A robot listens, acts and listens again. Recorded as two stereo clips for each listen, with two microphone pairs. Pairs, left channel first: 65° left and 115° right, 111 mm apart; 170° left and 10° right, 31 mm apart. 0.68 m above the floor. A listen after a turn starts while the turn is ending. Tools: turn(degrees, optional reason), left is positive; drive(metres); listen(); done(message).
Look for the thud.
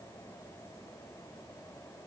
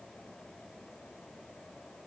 listen()
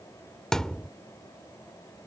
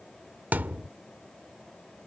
turn(degrees=-20, reason="The thud: 20° right.")
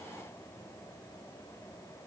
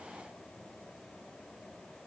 done("Facing where the thud came from. I can't hear it now.")